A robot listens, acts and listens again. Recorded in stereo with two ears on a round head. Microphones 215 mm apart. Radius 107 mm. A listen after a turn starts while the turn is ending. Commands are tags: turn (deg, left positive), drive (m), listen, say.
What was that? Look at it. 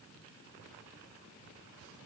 <listen/>
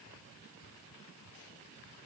<listen/>
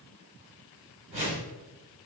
<turn deg="-25"/>
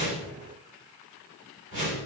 <turn deg="-125"/>
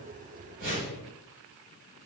<turn deg="-40"/>
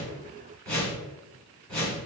<say>Found it: a whoosh, straight ahead, 1 to 2 m away.</say>